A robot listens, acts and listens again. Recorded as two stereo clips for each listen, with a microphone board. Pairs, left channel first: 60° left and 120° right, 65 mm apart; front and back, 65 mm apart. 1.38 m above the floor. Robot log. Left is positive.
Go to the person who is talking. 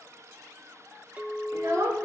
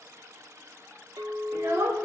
note: The child speaking: 145° right.
cmd yaw -145
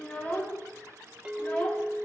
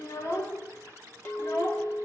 note: The child speaking is now 10° right.
cmd yaw -10
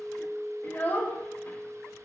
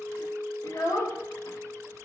cmd fwd 1.0
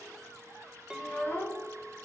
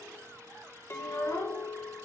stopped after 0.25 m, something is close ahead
note: The child speaking is now 10° left.
cmd yaw +10
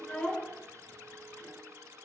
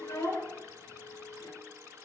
end: Blocked. The child speaking is further on, straight ahead.